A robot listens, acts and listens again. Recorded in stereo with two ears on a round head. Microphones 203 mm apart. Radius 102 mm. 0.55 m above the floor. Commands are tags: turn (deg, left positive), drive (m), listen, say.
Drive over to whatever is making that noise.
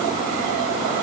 <listen/>
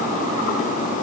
<listen/>
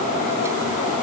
<say>I can't make out anything.</say>